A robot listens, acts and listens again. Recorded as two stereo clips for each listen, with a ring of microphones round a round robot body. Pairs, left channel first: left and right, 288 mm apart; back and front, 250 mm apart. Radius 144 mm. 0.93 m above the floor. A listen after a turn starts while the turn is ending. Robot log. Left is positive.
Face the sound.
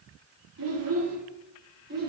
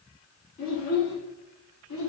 note: The child speaking: 150° right.
cmd yaw -150
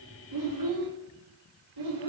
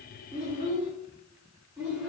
note: The child speaking is now 90° right.
cmd yaw -90
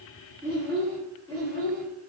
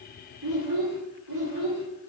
end: Found it: a child speaking, straight ahead.